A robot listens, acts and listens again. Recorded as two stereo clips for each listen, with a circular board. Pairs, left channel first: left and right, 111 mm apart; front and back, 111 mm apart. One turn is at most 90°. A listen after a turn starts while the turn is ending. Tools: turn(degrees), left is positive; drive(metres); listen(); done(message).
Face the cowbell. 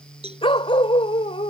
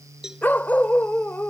turn(degrees=-90)
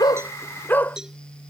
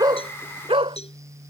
done("Found it: a cowbell, straight ahead.")